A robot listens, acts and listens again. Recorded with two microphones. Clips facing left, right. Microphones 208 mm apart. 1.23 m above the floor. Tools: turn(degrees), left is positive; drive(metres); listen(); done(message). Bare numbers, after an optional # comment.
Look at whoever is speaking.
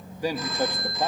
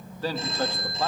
# The man speaking: about 20° left or 160° left.
turn(20)
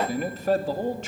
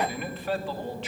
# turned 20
# So it is at 135° left.
turn(135)
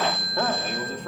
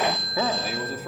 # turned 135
done("Found it: a man speaking, straight ahead, 2 to 4 m away.")